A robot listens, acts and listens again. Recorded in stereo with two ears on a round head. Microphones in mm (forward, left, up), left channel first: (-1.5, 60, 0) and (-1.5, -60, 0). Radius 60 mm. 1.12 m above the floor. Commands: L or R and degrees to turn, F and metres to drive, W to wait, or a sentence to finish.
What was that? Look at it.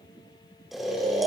L30
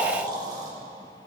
R30
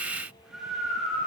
Facing the snoring, over 4 m away.